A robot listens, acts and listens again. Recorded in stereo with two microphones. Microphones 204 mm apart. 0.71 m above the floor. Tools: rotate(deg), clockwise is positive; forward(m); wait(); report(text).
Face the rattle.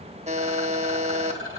rotate(90)
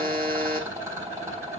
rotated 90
rotate(15)
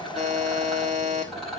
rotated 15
report("Found it: a rattle, straight ahead.")